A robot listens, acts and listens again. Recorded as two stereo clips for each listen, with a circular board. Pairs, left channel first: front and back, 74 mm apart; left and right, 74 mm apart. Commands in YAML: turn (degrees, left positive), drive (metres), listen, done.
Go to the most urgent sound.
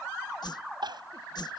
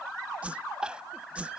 turn: -165
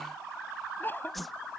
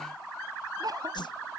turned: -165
turn: -60
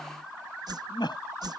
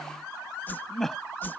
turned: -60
drive: 1.0
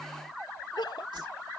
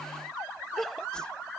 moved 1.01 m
drive: 1.0
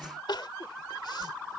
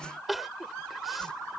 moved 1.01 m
drive: 1.0
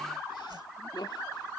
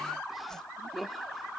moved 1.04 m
drive: 1.0
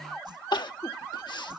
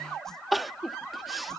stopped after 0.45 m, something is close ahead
done: "Arrived at the crying, straight ahead."